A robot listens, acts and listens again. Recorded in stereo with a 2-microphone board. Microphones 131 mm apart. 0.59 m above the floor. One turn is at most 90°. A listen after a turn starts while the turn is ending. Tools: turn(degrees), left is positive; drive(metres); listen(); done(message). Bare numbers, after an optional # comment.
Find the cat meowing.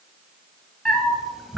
turn(-30)
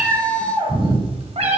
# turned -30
# So it is at 125° right.
turn(-90)
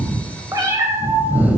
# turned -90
# The cat meowing is now 10° right.
turn(-10)
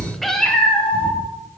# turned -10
# The cat meowing is now 10° left.
turn(10)
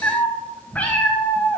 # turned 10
# The cat meowing is now 10° left.
turn(10)
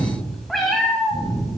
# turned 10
done("Found it: a cat meowing, straight ahead, 1 to 2 m away.")